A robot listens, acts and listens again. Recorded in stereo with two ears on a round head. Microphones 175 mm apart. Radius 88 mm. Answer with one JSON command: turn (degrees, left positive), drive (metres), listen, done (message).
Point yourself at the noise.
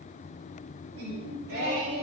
{"turn": -90}
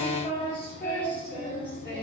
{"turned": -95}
{"turn": 10}
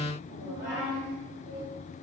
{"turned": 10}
{"done": "Found it: singing, straight ahead."}